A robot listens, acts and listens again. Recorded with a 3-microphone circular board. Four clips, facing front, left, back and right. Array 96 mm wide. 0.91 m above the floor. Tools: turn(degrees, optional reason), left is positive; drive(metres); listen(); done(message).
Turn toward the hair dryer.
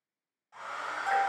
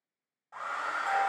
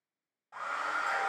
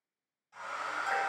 turn(degrees=120, reason="The hair dryer: 120° left.")
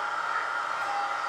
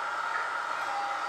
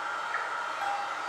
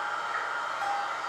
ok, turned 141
turn(degrees=-20, reason="The hair dryer is now 20° right.")
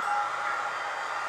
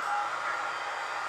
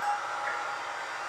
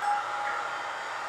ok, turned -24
done("Found it: a hair dryer, straight ahead, 2 to 4 m away.")